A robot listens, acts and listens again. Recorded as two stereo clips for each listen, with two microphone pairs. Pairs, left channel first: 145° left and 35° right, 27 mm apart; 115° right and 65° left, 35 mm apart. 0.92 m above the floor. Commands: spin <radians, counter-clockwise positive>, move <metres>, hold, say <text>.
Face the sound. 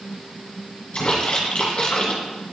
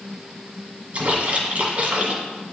spin 1.75
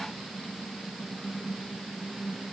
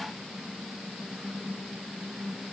say Facing where the splash came from. I can't hear it now.